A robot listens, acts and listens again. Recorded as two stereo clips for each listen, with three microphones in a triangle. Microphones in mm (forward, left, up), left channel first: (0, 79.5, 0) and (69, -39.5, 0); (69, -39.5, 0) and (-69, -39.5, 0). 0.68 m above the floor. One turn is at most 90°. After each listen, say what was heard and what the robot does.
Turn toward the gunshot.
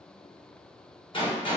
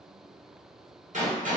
The gunshot: 170° left. Turn 90° left.
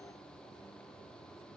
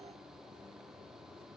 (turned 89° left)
Nothing new. It was at 80° left. Turn 80° left.
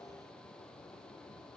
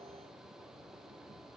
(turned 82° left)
Facing where the gunshot came from. I can't hear it now.